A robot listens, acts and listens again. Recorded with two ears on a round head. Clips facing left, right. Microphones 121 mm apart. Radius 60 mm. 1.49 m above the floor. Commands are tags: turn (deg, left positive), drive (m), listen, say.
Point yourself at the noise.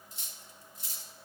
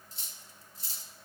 <turn deg="-25"/>
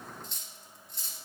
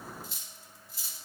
<say>Facing the cutlery clinking, 1 to 2 m away.</say>